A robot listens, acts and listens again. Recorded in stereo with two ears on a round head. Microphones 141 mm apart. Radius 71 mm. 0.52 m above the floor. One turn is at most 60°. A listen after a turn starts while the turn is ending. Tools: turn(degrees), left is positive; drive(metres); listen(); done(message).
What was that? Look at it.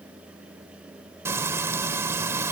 turn(degrees=-20)
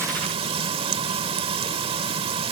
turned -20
turn(degrees=-60)
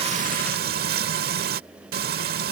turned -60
turn(degrees=-60)
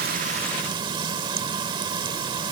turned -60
turn(degrees=-30)
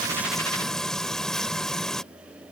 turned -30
done("Found it: frying, straight ahead.")